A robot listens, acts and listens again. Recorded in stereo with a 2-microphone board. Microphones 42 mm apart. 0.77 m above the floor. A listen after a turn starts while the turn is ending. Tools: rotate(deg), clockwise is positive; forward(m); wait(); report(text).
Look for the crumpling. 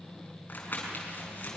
rotate(-45)
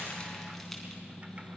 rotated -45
wait()
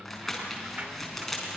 report("Found it: crumpling, straight ahead.")